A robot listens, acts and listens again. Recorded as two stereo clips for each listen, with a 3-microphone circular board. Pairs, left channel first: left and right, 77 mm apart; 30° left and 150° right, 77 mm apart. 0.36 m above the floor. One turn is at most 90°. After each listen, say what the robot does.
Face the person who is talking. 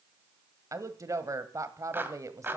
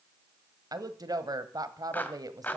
Turn 90° right.
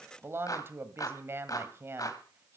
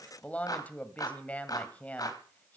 Turn 40° right.
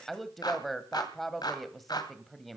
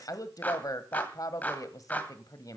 Found it: a woman speaking, straight ahead.